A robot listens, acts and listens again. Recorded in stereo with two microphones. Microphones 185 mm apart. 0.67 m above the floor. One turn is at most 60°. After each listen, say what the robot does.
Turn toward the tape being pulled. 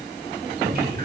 Keep listening.
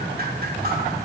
Keep listening.
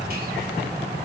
I can't make out tape being pulled, only dripping.